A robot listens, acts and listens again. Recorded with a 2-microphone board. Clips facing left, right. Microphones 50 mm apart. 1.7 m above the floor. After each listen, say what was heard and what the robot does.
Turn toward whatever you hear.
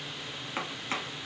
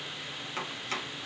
The chopping: about 15° left or 165° left. Turn 15° left.
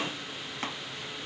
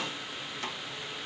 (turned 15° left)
So it is at 150° left. Turn 150° left.
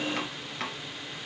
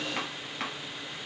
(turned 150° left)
Facing the chopping.